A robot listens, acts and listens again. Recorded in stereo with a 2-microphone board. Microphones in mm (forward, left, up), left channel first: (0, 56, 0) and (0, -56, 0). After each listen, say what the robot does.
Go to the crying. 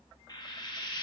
Keep listening.
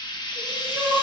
Turn 30° right.
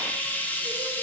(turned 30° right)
Keep listening.
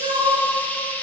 Turn 145° right.
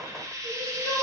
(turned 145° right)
Turn 20° left.
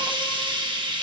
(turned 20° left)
Keep listening.
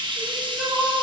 Drive 1.0 m forward.
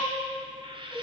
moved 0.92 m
Drive 1.0 m forward.
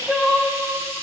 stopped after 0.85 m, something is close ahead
Arrived at the crying, straight ahead.